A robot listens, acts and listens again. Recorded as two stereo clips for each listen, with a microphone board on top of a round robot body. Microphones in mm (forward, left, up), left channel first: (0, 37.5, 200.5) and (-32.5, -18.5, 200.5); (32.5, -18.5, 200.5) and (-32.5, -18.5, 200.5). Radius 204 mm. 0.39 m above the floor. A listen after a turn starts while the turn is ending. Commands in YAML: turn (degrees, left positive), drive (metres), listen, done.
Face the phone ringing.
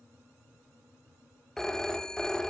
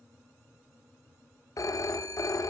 turn: -20
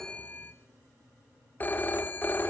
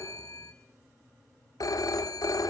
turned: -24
done: "Found it: a phone ringing, straight ahead, under 1 m away."